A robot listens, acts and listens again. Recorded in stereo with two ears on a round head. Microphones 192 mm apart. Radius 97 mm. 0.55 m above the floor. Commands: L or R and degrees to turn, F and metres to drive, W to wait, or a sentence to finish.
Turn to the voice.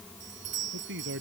R55
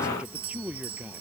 Facing the man speaking.